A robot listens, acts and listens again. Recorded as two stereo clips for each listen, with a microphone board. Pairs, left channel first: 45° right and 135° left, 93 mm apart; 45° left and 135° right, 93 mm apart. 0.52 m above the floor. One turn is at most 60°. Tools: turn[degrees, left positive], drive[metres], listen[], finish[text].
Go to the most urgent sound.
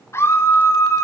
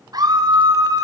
Thought: The scream: 100° right.
Action: turn[-60]
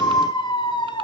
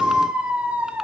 Thought: The scream is now 60° right.
Action: turn[-60]
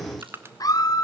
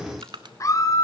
Action: drive[1.0]
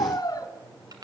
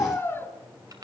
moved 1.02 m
Thought: The scream is now 15° right.
Action: turn[-15]
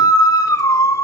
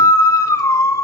Action: drive[1.0]
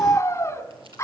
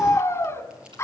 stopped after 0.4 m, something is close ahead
Action: finish[Arrived at the scream, straight ahead.]